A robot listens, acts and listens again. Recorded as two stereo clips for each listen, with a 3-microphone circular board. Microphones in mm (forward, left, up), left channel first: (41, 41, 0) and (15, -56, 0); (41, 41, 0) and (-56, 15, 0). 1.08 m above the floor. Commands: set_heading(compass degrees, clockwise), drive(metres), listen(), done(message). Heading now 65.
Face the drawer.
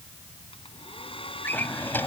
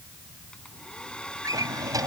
set_heading(280)
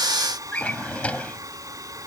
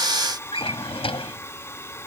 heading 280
done("Facing the drawer.")